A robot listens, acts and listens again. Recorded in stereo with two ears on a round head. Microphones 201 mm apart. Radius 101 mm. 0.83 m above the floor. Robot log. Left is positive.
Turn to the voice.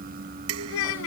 note: The child speaking: about 75° left or 105° left.
cmd yaw +75
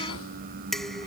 cmd idle
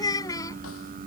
note: So it is at 15° left.
cmd yaw +15
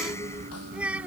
end: Found it: a child speaking, straight ahead.